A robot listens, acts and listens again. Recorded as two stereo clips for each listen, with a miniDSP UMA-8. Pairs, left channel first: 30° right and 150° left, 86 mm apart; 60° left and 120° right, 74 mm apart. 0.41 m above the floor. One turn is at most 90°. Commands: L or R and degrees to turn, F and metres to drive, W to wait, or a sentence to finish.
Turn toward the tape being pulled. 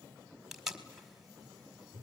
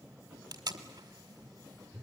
R90
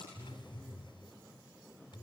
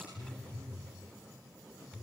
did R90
R35
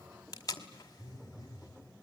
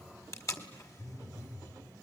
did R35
L15
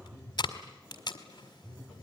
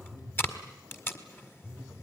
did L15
Facing the tape being pulled.